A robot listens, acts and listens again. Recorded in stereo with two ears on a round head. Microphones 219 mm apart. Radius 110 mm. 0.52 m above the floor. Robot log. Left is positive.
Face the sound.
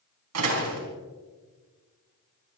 note: The door slam: about 75° right or 105° right.
cmd yaw -75
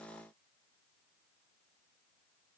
cmd idle
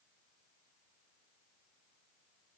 end: I heard a door slam, but can't make it out now. It was about straight ahead or 30° right.